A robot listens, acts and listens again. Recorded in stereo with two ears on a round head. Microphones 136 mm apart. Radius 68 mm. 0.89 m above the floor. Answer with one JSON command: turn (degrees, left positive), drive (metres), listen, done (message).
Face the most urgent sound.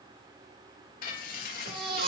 {"turn": -65}
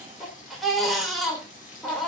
{"done": "Facing the baby crying, 2 to 4 m away."}